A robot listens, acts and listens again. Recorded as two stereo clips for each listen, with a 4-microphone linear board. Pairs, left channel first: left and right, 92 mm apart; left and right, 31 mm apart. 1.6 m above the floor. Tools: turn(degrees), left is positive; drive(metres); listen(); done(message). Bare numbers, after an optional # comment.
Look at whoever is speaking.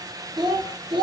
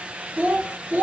# The child speaking: about 60° right or 120° right.
turn(-60)
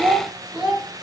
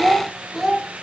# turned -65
done("Facing the child speaking.")